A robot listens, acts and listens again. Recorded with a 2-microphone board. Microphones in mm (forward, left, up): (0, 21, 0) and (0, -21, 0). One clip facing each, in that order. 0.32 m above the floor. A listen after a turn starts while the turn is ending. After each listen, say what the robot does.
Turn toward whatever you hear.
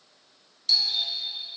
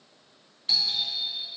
Turn 20° right.
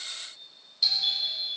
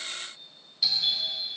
Facing the doorbell, 2 to 4 m away.